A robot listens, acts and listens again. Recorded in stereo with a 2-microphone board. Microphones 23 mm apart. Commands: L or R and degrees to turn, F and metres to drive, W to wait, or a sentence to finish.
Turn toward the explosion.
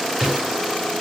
R30
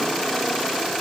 W
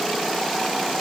I heard an explosion, but can't make it out now. It was about straight ahead or 120° right.